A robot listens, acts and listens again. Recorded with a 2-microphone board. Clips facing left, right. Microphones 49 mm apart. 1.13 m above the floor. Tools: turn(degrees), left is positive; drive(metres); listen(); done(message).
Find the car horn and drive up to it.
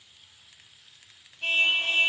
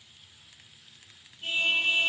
turn(degrees=90)
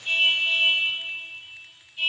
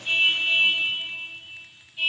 drive(metres=1.0)
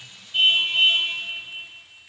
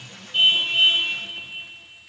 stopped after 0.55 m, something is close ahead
turn(degrees=-10)
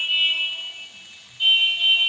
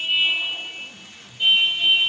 done("Something is in my way. I am facing the car horn but have not reached it.")